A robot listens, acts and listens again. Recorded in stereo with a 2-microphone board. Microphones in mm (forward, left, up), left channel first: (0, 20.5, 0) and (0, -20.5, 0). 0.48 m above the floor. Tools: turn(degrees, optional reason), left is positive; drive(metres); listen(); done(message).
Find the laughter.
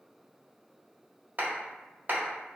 listen()
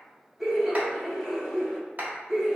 turn(degrees=30)
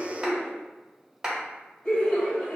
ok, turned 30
turn(degrees=145, reason="So it is at 145° left.")
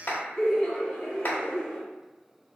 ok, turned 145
turn(degrees=15, reason="The laughter is now 15° left.")
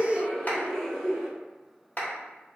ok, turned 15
done("Facing the laughter, 1 to 2 m away.")